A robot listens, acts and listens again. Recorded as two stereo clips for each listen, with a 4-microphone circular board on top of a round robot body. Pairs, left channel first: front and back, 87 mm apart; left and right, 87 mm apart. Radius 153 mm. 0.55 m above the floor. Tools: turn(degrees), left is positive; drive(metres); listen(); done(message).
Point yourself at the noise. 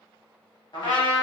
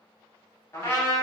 turn(degrees=35)
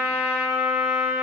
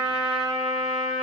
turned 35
done("Facing the trumpet.")